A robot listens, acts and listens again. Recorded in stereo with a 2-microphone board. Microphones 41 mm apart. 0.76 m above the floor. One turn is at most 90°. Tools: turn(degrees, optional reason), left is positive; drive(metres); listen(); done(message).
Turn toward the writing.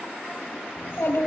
listen()
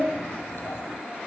listen()
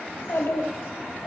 done("I can't make out writing, only a child speaking.")